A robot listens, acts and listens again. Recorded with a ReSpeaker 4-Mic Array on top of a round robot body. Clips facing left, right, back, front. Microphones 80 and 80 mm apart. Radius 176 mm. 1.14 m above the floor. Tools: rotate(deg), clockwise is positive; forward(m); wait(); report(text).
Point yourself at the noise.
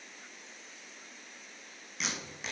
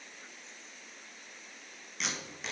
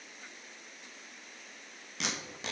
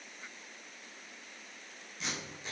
rotate(-180)
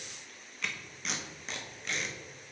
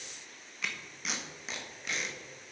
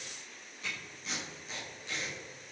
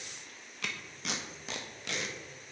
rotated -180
report("Facing the tape being pulled, 1 to 2 m away.")